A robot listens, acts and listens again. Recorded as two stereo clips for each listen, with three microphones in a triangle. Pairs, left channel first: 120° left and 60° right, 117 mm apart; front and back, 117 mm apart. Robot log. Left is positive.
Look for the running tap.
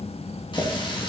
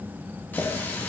note: The running tap: 75° left.
cmd yaw +75
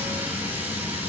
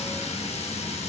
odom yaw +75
note: The running tap is now 15° left.
cmd yaw +15
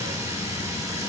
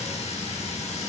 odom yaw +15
end: Facing the running tap, 1 to 2 m away.